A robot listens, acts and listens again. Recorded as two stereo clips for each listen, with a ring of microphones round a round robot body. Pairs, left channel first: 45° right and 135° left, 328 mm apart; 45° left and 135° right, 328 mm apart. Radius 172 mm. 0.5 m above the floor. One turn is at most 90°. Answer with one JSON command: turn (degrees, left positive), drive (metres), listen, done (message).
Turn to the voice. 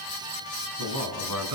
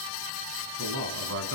{"turn": 90}
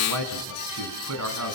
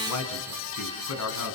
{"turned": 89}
{"turn": 90}
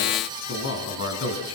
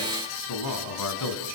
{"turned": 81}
{"done": "Found it: a man speaking, straight ahead."}